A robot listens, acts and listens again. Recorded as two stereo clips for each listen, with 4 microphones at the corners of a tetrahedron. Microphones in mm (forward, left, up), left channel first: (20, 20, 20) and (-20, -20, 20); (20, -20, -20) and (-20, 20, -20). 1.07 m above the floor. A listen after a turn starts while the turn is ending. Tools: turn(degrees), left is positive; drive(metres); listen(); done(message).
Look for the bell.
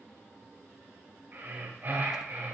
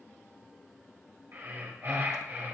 listen()
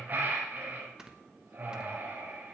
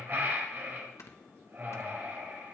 listen()
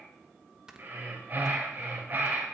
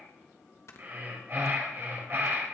done("I can't make out a bell, only breathing and snoring.")